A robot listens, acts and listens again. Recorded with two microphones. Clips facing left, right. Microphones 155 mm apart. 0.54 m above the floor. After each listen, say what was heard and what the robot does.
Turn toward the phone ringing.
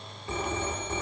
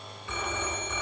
The phone ringing: about 35° left or 145° left. Turn 35° left.
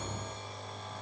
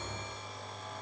Keep listening.
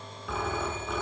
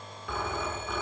Facing the phone ringing.